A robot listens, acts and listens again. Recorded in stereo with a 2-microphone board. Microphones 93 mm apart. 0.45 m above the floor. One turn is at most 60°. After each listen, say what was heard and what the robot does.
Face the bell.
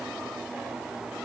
Keep listening.
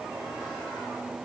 Keep listening.
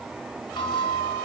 The bell: about 65° left or 115° left. Turn 60° left.
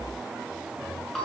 Found it: a bell, straight ahead, over 4 m away.